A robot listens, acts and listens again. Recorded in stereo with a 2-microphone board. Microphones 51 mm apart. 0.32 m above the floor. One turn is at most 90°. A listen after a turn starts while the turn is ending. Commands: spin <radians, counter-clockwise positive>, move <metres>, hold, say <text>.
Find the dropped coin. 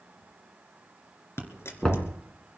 spin 0.96
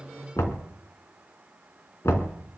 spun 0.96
hold
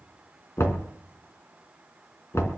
say I heard a dropped coin, but can't make it out now. It was about straight ahead or 70° left.